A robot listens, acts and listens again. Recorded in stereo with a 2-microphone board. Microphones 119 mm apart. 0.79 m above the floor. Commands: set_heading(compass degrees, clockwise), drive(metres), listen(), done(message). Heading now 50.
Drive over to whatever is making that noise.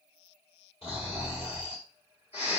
set_heading(0)
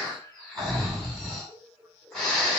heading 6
drive(1.0)
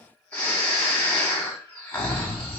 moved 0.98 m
set_heading(351)
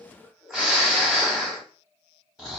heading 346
drive(1.0)
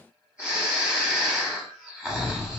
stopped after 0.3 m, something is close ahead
done("Arrived at the snoring, straight ahead.")